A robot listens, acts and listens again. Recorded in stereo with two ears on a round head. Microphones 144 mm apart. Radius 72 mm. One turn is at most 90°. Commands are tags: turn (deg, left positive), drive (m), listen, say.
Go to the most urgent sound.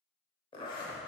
<listen/>
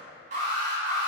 <turn deg="-45"/>
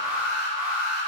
<turn deg="-10"/>
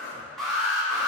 <drive m="1.0"/>
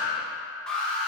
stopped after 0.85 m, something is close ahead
<say>Arrived at the alarm, straight ahead.</say>